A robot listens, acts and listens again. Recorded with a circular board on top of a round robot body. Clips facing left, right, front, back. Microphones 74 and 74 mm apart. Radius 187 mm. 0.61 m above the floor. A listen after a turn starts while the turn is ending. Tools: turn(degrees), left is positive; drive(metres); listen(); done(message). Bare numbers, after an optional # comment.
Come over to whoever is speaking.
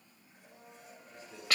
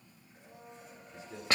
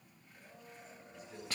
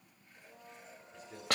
# The man speaking: 85° right.
turn(-85)
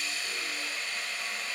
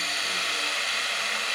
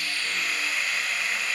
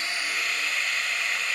listen()
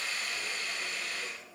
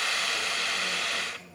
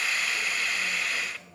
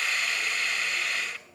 # The man speaking is now 15° right.
turn(-15)
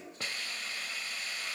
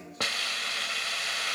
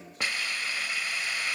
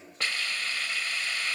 listen()
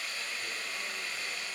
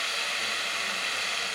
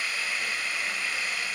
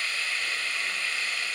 listen()
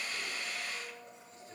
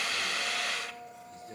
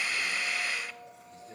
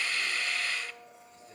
done("Facing where the man speaking came from. I can't hear it now. I did not reach it.")